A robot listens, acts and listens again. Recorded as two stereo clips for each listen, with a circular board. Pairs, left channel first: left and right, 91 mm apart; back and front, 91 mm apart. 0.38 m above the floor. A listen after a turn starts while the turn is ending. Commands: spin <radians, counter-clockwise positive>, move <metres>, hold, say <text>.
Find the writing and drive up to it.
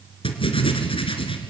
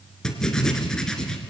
spin 1.66
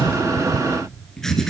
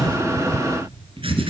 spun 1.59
move 1.0
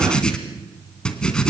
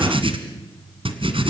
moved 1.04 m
spin 0.17
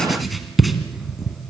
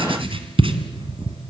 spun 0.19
move 1.0
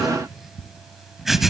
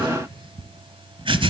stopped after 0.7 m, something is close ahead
say Arrived at the writing, straight ahead.